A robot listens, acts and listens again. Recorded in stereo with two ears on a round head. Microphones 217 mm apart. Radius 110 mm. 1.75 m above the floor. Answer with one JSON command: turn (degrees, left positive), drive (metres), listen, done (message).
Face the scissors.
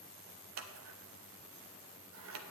{"turn": -55}
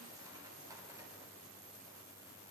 {"listen": true}
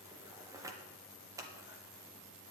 {"turn": -15}
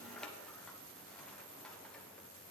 {"done": "Found it: scissors, straight ahead, under 1 m away."}